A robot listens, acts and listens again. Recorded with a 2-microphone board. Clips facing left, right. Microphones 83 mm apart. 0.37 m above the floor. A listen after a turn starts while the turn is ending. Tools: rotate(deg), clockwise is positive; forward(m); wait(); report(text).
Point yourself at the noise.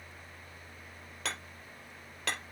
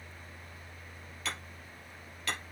rotate(-90)
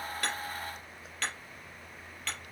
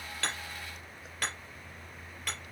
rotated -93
rotate(15)
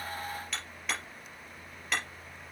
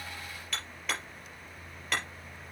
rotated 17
report("Facing the hammering.")